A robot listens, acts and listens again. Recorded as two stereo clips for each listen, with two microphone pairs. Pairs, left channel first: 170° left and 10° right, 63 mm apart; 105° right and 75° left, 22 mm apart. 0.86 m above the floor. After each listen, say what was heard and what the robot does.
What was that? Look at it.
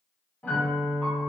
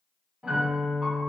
The piano: 105° left. Turn 105° left.
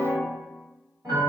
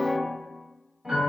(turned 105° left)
Found it: a piano, straight ahead, 1 to 2 m away.